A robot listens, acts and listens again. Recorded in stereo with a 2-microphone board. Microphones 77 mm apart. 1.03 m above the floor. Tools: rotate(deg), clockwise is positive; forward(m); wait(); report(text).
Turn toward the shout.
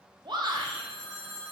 rotate(90)
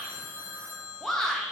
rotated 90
report("Found it: a shout, straight ahead, under 1 m away.")